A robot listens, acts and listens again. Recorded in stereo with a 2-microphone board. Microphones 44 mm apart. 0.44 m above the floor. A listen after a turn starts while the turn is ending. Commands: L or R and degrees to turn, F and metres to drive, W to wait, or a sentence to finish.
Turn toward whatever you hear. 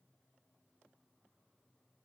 W
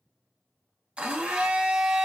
R20
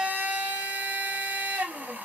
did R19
R140
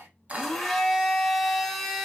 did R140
Found it: a blender, straight ahead, 1 to 2 m away.